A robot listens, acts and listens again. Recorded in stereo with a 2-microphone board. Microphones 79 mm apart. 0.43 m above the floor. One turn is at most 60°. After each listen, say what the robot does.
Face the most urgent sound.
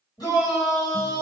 Turn 55° left.
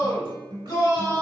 Turn 55° left.
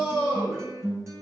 Turn 10° left.
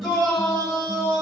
Found it: a shout, straight ahead, 1 to 2 m away.